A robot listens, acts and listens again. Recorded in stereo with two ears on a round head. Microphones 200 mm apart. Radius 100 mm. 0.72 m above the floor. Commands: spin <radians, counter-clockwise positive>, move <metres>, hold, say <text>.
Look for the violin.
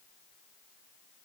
hold
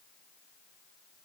hold
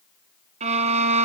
spin -0.61
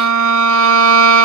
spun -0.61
spin -1.92
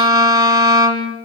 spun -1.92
spin -0.26
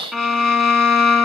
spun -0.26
say Facing the violin.